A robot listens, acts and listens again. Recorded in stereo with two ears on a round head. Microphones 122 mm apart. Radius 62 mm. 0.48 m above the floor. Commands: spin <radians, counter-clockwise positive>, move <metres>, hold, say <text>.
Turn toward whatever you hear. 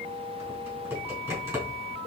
spin -0.35
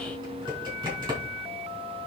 spin -2.44
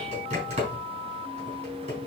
spin -0.87
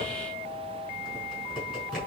say Facing the typing on a keyboard, over 4 m away.